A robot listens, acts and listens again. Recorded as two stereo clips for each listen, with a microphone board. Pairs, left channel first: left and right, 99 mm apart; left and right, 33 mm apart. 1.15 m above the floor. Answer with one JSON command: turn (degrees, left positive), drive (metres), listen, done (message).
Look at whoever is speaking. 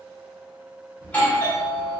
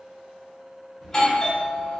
{"listen": true}
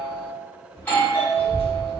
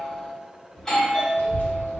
{"turn": 65}
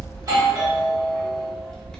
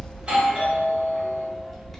{"done": "Facing the child speaking, under 1 m away."}